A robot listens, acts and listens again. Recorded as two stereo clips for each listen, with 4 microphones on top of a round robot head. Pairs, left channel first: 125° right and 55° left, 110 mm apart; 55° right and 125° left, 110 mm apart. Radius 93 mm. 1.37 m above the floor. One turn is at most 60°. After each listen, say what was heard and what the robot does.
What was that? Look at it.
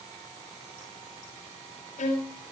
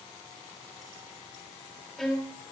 The violin: 140° right. Turn 60° right.
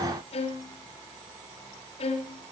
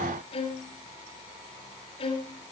The violin is now 95° right. Turn 60° right.
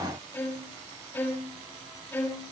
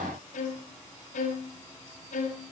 The violin is now 55° right. Turn 55° right.
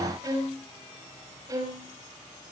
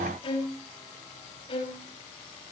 The violin is now 10° right. Turn 10° right.
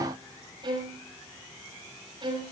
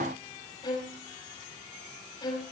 Facing the violin, over 4 m away.